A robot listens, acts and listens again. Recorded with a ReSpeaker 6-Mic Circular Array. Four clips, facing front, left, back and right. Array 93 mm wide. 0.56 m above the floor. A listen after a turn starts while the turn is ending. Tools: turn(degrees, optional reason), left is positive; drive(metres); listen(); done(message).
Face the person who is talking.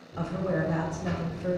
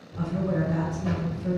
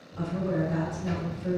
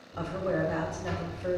turn(degrees=-50, reason="The woman speaking: 50° right.")
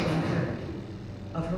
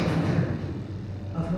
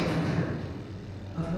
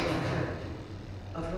listen()
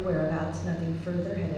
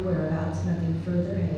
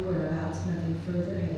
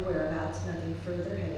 done("Facing the woman speaking, 1 to 2 m away.")